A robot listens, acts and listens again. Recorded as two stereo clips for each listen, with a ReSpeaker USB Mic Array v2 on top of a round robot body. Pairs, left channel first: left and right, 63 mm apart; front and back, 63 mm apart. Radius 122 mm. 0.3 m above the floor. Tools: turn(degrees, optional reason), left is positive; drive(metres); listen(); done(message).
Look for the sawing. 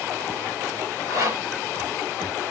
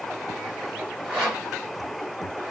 turn(degrees=-80, reason="The sawing: 80° right.")
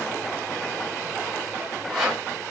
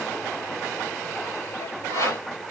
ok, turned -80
done("Found it: sawing, straight ahead.")